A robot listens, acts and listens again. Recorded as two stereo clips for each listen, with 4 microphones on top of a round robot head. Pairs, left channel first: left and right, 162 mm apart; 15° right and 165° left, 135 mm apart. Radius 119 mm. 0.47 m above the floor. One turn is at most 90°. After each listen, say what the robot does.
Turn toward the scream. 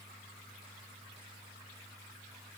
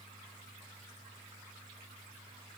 Keep listening.
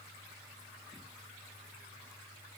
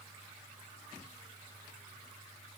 Keep listening.
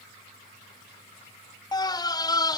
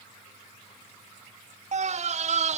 Turn 90° left.
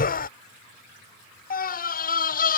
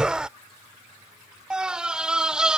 Turn 85° left.
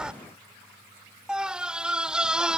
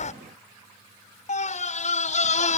Facing the scream.